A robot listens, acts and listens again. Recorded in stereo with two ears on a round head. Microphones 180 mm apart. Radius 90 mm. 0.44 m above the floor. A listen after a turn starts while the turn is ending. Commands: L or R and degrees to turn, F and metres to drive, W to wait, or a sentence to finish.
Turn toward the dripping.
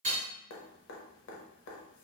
L65
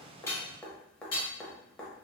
Found it: dripping, straight ahead.